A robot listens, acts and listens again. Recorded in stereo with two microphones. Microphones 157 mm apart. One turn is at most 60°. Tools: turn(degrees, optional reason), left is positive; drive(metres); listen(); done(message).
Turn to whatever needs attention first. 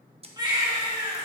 turn(degrees=-25, reason="The baby crying: about 25° right or 155° right.")
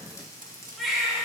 done("Found it: a baby crying, straight ahead, 2 to 4 m away.")